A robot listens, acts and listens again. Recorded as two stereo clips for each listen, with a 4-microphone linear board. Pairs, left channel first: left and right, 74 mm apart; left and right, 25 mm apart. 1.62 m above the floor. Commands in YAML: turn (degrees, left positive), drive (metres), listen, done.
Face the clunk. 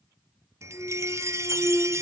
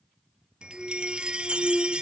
turn: 25
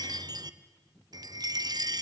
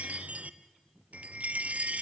listen: true
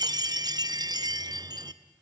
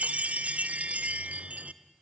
done: "I heard a clunk, but can't make it out now. It was about straight ahead or 130° left."